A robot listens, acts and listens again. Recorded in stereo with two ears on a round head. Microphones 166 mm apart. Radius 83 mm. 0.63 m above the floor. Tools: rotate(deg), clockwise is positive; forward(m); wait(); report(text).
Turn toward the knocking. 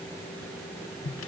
wait()
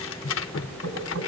rotate(90)
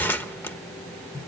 wait()
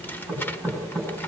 report("Facing the knocking, over 4 m away.")